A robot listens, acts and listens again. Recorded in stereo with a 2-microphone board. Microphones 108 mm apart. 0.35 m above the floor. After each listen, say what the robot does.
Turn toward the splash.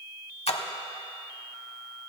Turn 70° left.
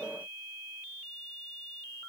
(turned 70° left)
Keep listening.
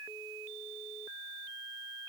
I heard a splash, but can't make it out now. It was about straight ahead or 40° left.